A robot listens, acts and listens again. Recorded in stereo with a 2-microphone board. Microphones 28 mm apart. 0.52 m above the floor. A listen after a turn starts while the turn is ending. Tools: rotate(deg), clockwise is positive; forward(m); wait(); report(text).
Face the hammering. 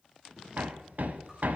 rotate(70)
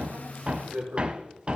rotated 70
rotate(35)
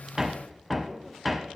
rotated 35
report("Facing the hammering, under 1 m away.")